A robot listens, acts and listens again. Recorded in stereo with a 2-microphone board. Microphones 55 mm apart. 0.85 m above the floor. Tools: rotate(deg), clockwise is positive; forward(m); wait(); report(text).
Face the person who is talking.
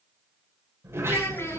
rotate(-50)
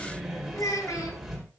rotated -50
rotate(-80)
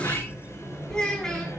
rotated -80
rotate(-15)
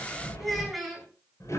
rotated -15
report("Found it: a child speaking, straight ahead, over 4 m away.")